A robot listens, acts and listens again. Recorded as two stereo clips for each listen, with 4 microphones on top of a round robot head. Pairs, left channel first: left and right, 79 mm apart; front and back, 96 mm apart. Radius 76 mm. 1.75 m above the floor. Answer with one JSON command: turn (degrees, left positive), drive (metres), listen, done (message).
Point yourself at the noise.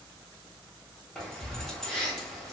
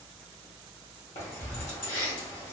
{"turn": 10}
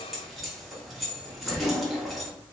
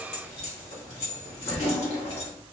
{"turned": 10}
{"done": "Facing the keys jangling, 1 to 2 m away."}